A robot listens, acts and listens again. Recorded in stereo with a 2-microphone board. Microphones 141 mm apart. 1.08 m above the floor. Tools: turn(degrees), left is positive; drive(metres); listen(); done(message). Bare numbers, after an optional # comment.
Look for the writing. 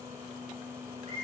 listen()
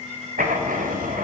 turn(-90)
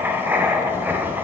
# So it is at 15° right.
turn(-15)
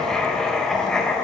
done("Facing the writing.")